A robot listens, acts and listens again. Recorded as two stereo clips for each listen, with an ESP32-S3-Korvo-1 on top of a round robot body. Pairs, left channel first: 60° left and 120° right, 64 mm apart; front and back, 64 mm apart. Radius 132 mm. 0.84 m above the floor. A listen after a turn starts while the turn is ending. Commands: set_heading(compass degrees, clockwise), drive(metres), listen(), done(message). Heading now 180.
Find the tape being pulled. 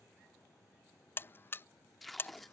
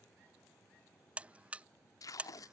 set_heading(210)
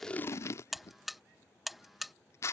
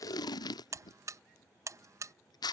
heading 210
set_heading(200)
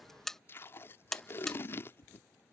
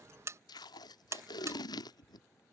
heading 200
done("Found it: tape being pulled, straight ahead.")